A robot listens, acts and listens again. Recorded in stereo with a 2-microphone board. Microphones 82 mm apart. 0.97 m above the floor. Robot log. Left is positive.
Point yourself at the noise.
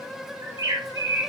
note: The bird: about 45° right or 135° right.
cmd yaw -45
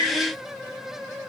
note: So it is at 90° right.
cmd yaw -90
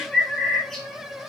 end: Facing the bird.